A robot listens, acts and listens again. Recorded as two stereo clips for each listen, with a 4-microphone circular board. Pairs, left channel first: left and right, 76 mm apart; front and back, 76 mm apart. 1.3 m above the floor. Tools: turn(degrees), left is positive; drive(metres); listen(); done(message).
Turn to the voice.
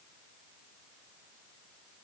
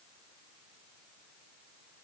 listen()
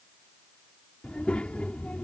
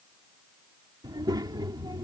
turn(degrees=165)
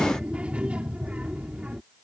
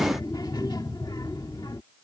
turn(degrees=-15)
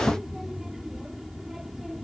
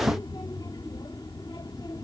done("Found it: a child speaking, straight ahead.")